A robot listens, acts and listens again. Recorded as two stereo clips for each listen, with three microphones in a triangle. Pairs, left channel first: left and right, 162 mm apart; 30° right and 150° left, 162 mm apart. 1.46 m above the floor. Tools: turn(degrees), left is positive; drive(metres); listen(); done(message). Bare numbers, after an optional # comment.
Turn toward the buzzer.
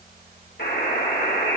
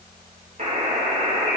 # The buzzer: 105° left.
turn(105)
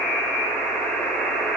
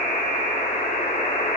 # The buzzer is now 10° left.
turn(10)
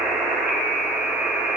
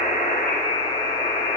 done("Facing the buzzer, 2 to 4 m away.")